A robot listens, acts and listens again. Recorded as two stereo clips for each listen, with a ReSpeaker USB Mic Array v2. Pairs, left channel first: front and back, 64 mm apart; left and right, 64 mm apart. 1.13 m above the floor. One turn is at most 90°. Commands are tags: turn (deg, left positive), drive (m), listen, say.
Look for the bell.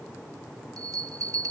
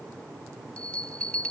<turn deg="90"/>
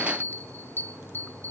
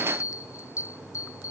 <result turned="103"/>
<turn deg="55"/>
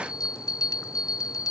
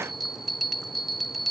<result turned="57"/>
<say>Facing the bell.</say>